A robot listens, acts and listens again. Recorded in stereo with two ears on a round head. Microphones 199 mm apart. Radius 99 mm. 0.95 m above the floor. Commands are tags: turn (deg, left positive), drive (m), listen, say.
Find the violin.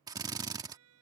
<turn deg="-75"/>
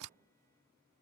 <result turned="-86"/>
<listen/>
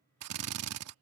<listen/>
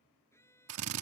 <turn deg="10"/>
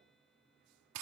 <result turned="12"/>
<listen/>
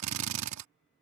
<listen/>
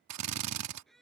<say>Found it: a violin, straight ahead.</say>